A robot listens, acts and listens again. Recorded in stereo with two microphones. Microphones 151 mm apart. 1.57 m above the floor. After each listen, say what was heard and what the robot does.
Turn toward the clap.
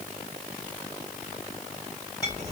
Keep listening.
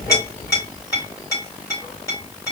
Keep listening.
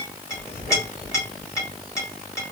I can't make out a clap to turn to.